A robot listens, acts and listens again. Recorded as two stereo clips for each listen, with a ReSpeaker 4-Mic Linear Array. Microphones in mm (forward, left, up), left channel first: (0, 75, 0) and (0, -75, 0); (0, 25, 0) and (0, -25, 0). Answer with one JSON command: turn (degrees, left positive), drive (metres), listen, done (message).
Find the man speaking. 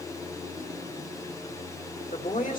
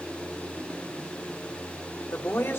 {"turn": 60}
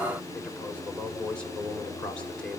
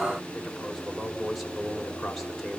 {"done": "Facing the man speaking, 2 to 4 m away."}